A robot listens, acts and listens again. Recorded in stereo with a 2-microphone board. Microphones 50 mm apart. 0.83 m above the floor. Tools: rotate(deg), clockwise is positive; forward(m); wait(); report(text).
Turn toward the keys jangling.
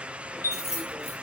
rotate(-70)
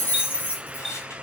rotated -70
rotate(-40)
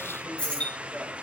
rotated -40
rotate(-20)
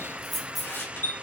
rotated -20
report("Facing the keys jangling, 2 to 4 m away.")